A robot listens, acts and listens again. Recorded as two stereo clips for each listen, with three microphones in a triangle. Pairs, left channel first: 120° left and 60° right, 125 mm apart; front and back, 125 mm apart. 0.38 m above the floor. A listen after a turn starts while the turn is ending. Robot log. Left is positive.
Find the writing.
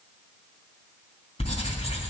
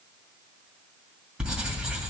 note: The writing: 100° left.
cmd yaw +100
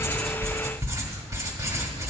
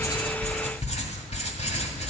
end: Found it: writing, straight ahead.